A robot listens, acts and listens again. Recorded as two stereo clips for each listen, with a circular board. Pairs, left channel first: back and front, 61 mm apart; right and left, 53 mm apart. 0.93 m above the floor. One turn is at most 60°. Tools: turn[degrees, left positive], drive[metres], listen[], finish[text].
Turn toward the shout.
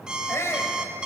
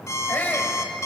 Thought: The shout: 140° right.
Action: turn[-60]
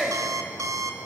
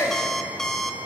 Thought: The shout is now 75° right.
Action: turn[-60]
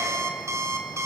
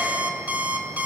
Thought: Nothing new. It was at 15° right.
Action: turn[-15]
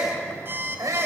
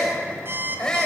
Thought: The shout is now 15° right.
Action: turn[-15]
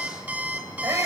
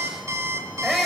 Action: finish[Facing the shout.]